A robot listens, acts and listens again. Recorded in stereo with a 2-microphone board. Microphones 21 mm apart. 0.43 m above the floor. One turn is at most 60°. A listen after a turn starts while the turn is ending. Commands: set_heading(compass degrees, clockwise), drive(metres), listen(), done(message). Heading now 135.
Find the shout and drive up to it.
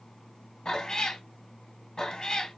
listen()
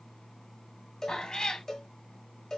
listen()
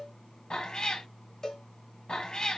done("I can't make out a shout, only a cowbell and a cat meowing.")